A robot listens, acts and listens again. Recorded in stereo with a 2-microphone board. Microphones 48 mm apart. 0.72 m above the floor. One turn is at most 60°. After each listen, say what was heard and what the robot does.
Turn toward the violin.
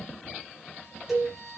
The violin: about 65° right or 115° right. Turn 60° right.
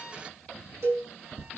Keep listening.
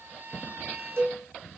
So it is at 55° right. Turn 55° right.
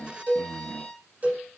The violin is now 20° left. Turn 20° left.
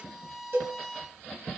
Facing the violin.